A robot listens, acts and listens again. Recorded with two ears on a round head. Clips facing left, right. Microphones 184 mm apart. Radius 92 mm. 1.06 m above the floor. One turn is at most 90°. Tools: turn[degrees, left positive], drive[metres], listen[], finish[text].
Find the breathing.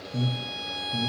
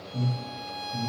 Thought: The breathing: about 40° left or 140° left.
Action: turn[40]
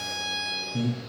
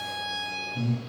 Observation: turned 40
Thought: So it is at 95° left.
Action: turn[90]
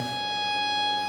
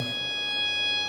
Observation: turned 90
Action: listen[]
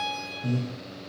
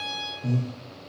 Action: finish[Facing the breathing.]